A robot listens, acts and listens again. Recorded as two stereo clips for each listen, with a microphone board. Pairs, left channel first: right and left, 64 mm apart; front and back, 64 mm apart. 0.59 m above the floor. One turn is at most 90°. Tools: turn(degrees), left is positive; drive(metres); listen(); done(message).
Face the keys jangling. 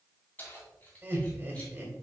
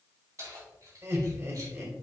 turn(degrees=-90)
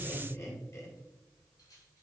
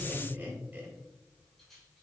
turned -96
turn(degrees=-85)
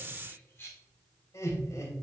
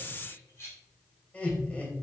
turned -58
turn(degrees=-40)
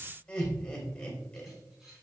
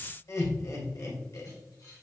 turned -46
done("Found it: keys jangling, straight ahead.")